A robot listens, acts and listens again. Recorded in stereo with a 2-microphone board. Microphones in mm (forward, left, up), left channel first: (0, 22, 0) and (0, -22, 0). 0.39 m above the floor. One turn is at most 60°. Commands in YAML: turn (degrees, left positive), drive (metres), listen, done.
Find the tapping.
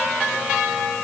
listen: true
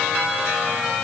listen: true
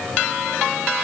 done: "I can't make out tapping to turn to."